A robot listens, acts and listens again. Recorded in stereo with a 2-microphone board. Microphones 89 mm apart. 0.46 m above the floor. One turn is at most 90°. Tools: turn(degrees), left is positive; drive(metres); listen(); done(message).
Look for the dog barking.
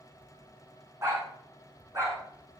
turn(degrees=-25)
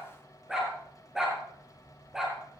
done("Facing the dog barking.")